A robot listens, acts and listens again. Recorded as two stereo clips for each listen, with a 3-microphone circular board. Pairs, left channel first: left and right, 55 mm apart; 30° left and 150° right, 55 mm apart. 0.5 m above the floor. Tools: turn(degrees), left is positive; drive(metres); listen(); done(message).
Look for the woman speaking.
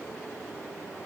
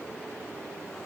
listen()
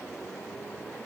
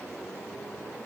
listen()
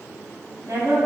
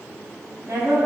turn(degrees=-120)
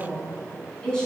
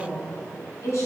turn(degrees=15)
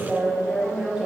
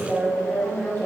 turn(degrees=-10)
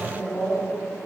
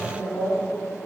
done("Found it: a woman speaking, straight ahead, over 4 m away.")